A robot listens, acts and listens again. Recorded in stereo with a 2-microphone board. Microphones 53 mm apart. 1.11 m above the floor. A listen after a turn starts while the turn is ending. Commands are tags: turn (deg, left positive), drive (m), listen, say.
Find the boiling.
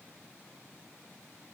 <listen/>
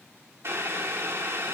<turn deg="-60"/>
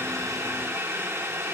<turn deg="-60"/>
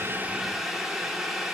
<say>Found it: boiling, straight ahead.</say>